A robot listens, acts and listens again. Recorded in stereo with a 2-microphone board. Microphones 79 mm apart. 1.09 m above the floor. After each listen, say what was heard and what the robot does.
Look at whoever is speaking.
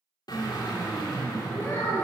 The child speaking: about 25° left or 155° left. Turn 25° left.
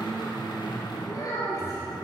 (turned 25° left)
So it is at 125° left. Turn 125° left.
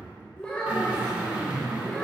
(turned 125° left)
The child speaking is now 15° left. Turn 15° left.
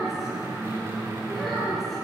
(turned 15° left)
Found it: a child speaking, straight ahead, 2 to 4 m away.